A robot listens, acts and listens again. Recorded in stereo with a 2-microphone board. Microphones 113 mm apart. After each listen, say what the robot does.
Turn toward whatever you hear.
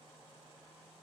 Keep listening.
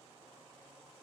Keep listening.
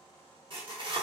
Turn 45° right.
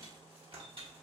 Turn 75° right.
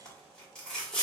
Turn 10° left.
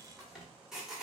Found it: tearing paper, straight ahead.